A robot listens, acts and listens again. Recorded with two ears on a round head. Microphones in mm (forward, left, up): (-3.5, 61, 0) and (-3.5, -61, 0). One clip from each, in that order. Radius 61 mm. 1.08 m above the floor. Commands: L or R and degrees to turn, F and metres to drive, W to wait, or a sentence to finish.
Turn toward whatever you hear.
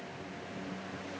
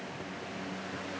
W
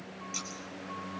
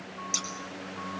R70
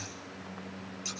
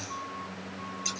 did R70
Found it: scissors, straight ahead, over 4 m away.